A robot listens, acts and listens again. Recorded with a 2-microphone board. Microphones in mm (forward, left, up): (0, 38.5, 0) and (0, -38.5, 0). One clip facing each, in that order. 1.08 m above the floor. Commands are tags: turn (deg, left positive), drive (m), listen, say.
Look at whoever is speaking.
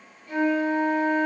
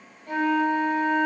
<listen/>
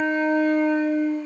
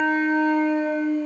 <listen/>
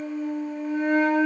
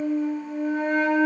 <say>I can't make out anyone speaking to turn to.</say>